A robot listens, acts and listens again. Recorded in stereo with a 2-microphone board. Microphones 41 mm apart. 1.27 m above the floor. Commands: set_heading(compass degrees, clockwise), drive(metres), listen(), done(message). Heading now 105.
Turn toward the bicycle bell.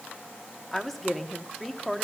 listen()
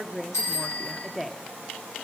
set_heading(15)
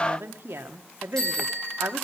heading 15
set_heading(5)
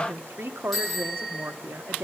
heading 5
done("Found it: a bicycle bell, straight ahead.")